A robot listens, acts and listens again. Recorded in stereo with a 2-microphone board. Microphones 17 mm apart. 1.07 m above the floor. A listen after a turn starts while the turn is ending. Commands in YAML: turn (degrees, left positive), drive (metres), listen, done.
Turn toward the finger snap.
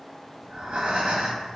listen: true
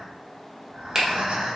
turn: -15
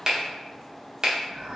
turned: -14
turn: -150
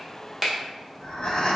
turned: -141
turn: -10
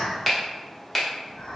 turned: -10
done: "Facing the finger snap, 1 to 2 m away."